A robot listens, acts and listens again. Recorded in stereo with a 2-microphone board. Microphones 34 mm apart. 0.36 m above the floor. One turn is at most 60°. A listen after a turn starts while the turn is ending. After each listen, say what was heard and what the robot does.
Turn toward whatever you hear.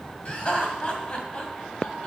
The laughter: about 35° left or 145° left. Turn 35° left.
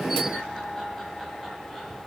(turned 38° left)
Keep listening.
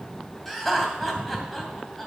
Found it: laughter, straight ahead.